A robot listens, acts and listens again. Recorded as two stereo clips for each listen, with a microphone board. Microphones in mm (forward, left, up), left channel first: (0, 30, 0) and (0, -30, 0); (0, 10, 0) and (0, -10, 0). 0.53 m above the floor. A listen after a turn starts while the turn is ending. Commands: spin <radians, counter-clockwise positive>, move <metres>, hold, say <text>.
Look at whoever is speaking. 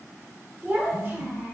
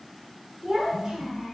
spin -0.52
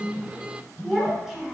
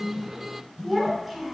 say Facing the child speaking.